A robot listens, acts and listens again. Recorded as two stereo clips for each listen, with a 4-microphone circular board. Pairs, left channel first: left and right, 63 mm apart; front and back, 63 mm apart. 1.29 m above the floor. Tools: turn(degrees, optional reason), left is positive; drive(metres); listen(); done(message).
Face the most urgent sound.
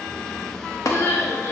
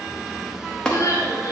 turn(degrees=35, reason="The crying: 35° left.")
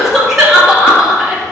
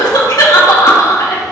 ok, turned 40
done("Found it: crying, straight ahead.")